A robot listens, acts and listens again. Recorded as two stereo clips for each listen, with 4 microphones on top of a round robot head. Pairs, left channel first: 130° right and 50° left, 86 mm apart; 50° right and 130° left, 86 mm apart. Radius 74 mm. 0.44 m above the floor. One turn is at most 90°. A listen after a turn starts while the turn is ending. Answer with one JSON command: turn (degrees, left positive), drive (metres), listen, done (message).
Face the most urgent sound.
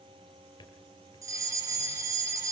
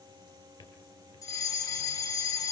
{"done": "Found it: a fire alarm, straight ahead, over 4 m away."}